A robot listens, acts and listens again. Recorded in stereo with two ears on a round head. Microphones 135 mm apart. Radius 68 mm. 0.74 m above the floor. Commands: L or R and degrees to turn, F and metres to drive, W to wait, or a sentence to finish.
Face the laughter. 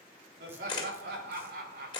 R70
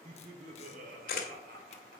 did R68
R60
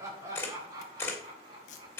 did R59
R25
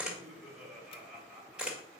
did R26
Facing the laughter, 2 to 4 m away.